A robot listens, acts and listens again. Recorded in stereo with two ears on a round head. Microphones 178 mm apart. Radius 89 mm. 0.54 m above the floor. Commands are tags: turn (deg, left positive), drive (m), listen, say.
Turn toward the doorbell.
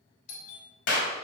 <turn deg="45"/>
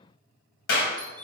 <say>Found it: a doorbell, straight ahead, 2 to 4 m away.</say>